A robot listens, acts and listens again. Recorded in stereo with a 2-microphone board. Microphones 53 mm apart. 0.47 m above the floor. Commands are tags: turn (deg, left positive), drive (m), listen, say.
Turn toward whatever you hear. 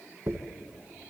<turn deg="-65"/>
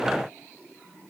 <listen/>
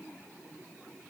<say>I heard a dropped coin, but can't make it out now. It was about straight ahead or 50° right.</say>